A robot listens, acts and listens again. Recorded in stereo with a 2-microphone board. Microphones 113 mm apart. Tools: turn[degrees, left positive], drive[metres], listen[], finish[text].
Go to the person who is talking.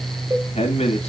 Thought: The man speaking: about 75° left or 105° left.
Action: turn[75]
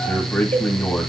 Thought: So it is at 15° left.
Action: turn[15]
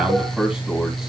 Action: drive[1.0]
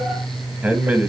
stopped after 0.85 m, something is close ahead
Thought: The man speaking is now 10° right.
Action: turn[-10]
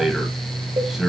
Action: finish[Arrived at the man speaking, straight ahead.]